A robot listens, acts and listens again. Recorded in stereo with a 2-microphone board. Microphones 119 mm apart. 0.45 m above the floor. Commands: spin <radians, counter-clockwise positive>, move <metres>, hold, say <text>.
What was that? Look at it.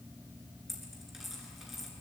spin 0.52
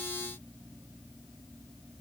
hold
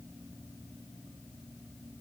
say I heard a dropped coin, but can't make it out now. It was about 30° right or 150° left.